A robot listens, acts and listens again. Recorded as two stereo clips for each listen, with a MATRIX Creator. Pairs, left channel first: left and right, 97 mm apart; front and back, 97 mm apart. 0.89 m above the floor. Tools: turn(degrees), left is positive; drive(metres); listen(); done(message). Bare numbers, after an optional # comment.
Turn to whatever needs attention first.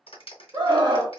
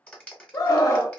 # The scream: 50° right.
turn(-50)
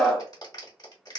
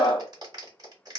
done("Found it: a scream, straight ahead, 1 to 2 m away.")